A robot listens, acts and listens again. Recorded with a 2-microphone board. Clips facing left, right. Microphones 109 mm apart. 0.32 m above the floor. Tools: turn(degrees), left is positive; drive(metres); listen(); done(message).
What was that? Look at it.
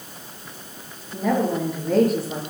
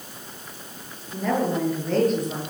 turn(degrees=30)
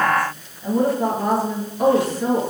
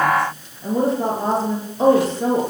turn(degrees=-25)
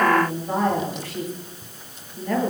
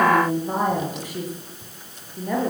turn(degrees=-15)
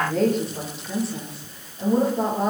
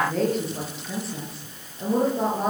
done("Facing the woman speaking, over 4 m away.")